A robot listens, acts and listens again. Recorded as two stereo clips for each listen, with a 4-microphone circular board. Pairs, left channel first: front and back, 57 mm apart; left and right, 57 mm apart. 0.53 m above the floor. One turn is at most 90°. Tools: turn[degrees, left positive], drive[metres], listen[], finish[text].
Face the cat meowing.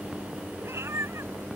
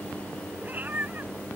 Thought: The cat meowing: 145° right.
Action: turn[-90]
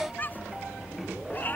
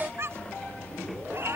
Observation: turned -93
Thought: The cat meowing is now 55° right.
Action: turn[-55]
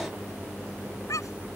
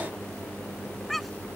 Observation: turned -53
Action: finish[Found it: a cat meowing, straight ahead.]